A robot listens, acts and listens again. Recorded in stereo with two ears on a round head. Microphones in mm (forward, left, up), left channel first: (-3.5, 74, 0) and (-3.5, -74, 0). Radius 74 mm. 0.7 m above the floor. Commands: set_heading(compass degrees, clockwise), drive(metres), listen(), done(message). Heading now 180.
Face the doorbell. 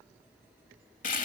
listen()
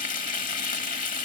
listen()
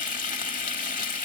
done("I can't make out a doorbell, only frying.")